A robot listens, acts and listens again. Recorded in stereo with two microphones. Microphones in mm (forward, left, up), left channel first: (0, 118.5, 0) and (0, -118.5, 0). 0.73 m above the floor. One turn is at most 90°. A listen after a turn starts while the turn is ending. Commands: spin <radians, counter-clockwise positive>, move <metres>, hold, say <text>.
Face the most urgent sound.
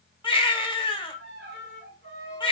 spin 0.35
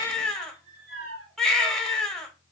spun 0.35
say Found it: a baby crying, straight ahead.